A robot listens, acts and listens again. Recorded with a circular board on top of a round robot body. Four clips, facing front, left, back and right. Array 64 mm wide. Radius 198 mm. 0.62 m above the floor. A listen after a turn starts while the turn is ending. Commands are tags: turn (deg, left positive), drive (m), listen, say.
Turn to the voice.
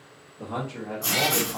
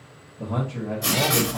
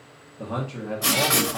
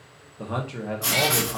<turn deg="-105"/>
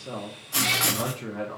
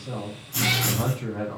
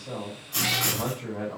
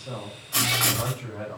<turn deg="25"/>
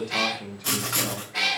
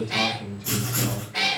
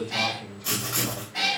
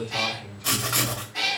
<turn deg="20"/>
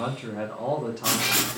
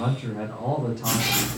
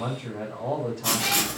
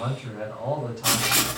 <say>Found it: a man speaking, straight ahead, 1 to 2 m away.</say>